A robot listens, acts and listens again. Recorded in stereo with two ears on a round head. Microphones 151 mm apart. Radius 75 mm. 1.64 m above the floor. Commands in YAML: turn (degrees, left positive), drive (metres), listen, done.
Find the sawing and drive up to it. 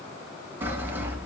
turn: -30
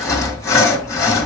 turn: 20
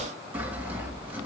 turn: -10
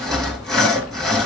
drive: 1.0
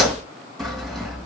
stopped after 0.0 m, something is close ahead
done: "Something is in my way. I am facing the sawing but have not reached it."